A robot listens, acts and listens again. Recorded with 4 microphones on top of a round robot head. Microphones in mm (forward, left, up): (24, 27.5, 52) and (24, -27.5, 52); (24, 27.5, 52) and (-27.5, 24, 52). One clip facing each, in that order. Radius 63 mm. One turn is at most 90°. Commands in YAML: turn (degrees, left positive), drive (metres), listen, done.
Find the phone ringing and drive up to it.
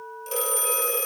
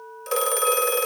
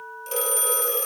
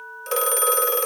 turn: -90
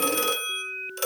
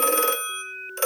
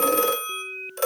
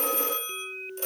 turn: -30
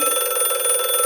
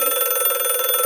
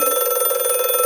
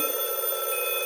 drive: 1.0
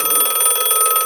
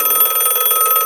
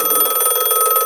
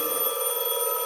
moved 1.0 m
turn: -10
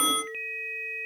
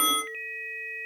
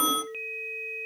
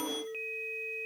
drive: 1.0
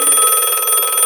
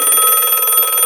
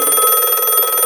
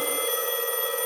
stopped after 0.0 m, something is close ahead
done: "Arrived at the phone ringing, straight ahead."